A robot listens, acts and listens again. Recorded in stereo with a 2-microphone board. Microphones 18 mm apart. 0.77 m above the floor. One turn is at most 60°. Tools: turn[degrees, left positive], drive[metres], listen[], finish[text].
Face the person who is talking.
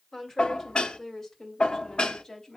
Thought: The woman speaking: about 30° left or 150° left.
Action: turn[30]
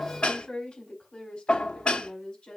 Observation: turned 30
Thought: So it is at 115° left.
Action: turn[60]
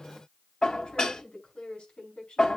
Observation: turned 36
Thought: The woman speaking is now 75° left.
Action: turn[60]
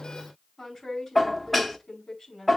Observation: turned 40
Thought: The woman speaking is now 30° left.
Action: turn[30]
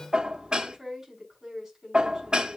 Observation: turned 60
Thought: The woman speaking is now 30° right.
Action: turn[-30]
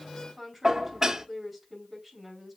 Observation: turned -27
Action: finish[Facing the woman speaking, over 4 m away.]